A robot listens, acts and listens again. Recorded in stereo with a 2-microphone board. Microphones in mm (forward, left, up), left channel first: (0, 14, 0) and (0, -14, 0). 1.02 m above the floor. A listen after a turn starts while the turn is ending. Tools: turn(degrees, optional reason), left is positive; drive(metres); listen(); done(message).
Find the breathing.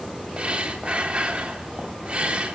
turn(degrees=-45, reason="The breathing: about 45° right or 135° right.")
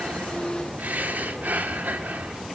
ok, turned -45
turn(degrees=-90, reason="So it is at 90° right.")
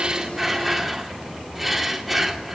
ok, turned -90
done("Found it: breathing, straight ahead, 2 to 4 m away.")